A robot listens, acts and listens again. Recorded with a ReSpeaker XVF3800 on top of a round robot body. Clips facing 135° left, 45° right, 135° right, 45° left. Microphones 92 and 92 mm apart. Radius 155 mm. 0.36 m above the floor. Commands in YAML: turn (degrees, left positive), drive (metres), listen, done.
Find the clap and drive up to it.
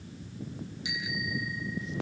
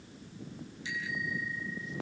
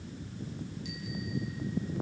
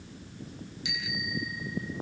listen: true
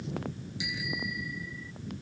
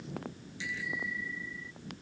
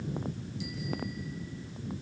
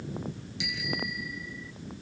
listen: true
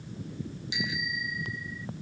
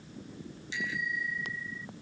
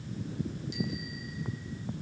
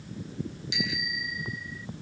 done: "I can't make out a clap, only a bicycle bell."